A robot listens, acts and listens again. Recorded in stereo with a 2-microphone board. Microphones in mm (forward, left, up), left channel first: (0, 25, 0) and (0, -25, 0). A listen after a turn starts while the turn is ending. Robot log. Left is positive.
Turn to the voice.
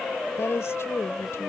note: The woman speaking: about 65° left or 115° left.
cmd yaw +65
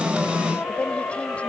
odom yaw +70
cmd idle
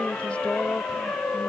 note: So it is at 30° left.
cmd yaw +30
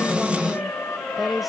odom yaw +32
end: Found it: a woman speaking, straight ahead.